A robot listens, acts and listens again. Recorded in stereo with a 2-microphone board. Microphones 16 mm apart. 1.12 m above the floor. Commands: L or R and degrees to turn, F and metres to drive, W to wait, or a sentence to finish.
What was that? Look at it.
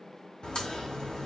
L60
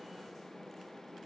W
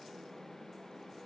I heard a crack, but can't make it out now. It was about straight ahead or 60° left.